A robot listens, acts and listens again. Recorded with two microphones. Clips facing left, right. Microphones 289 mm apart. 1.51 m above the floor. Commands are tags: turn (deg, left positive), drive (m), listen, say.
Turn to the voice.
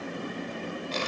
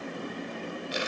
<listen/>
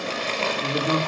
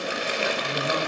<turn deg="55"/>
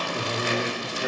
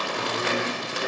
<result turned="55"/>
<say>Found it: a man speaking, straight ahead.</say>